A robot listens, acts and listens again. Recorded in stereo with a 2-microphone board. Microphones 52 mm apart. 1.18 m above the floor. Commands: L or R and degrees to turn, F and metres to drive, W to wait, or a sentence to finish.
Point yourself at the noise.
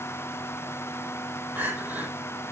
R35
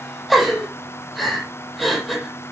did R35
Found it: crying, straight ahead.